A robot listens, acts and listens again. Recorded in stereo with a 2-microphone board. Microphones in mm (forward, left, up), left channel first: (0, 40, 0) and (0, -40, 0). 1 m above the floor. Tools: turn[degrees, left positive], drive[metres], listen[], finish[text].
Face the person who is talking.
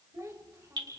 Thought: The child speaking: about 35° right or 145° right.
Action: turn[-35]
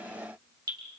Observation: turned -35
Action: listen[]
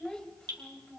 Thought: So it is at 15° left.
Action: turn[15]
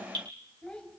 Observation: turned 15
Thought: The child speaking is now 10° left.
Action: turn[10]
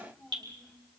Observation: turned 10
Thought: The child speaking is now 10° left.
Action: turn[10]
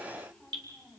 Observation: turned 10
Thought: The child speaking is now 10° left.
Action: turn[10]
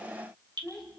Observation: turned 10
Action: finish[Found it: a child speaking, straight ahead, over 4 m away.]